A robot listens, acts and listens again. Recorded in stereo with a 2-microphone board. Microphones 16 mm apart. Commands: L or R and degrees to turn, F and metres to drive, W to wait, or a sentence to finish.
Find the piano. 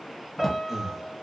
R30
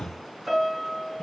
R120
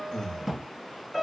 L15
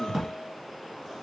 W
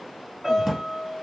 Found it: a piano, straight ahead, 1 to 2 m away.